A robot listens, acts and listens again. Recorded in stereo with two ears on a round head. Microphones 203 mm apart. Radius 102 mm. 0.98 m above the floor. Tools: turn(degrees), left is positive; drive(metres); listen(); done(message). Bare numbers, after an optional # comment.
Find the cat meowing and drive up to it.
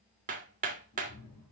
turn(90)
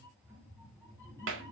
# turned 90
# So it is at 10° left.
turn(10)
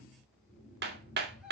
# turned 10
drive(1.0)
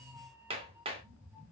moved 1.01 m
# The cat meowing is now 10° right.
turn(-10)
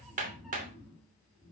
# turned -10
drive(1.0)
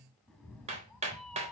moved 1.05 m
drive(1.0)
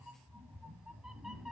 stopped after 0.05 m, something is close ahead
done("Arrived at the cat meowing, straight ahead.")